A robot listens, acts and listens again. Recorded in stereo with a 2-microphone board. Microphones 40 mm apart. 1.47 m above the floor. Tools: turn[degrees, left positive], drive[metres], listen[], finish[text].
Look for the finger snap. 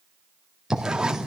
Action: listen[]
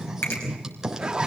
Thought: The finger snap: about 70° left or 110° left.
Action: turn[70]
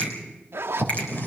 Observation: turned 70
Action: listen[]
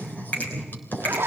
Thought: So it is at 40° left.
Action: turn[40]
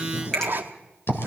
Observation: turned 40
Thought: The finger snap is now 15° left.
Action: turn[15]
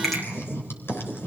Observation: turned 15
Action: listen[]
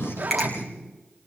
Action: finish[Facing the finger snap.]